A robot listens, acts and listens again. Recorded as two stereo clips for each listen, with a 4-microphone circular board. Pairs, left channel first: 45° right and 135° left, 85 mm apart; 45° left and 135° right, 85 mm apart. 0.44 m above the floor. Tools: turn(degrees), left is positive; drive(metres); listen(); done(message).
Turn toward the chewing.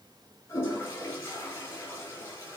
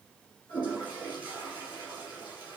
listen()
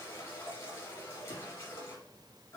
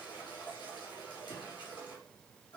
listen()
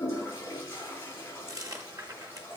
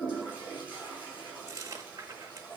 turn(degrees=175)
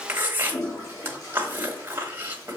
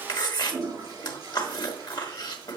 turn(degrees=75)
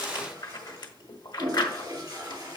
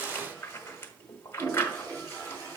turn(degrees=-15)
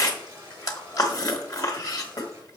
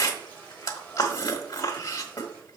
done("Found it: chewing, straight ahead, 1 to 2 m away.")